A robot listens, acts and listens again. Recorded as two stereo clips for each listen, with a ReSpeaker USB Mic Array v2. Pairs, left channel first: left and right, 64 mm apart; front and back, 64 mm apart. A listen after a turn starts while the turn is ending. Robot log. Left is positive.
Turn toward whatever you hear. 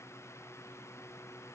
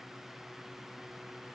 cmd idle
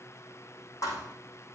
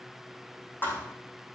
note: The thud: 60° left.
cmd yaw +60
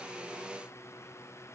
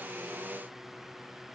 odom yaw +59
end: Facing where the thud came from. I can't hear it now.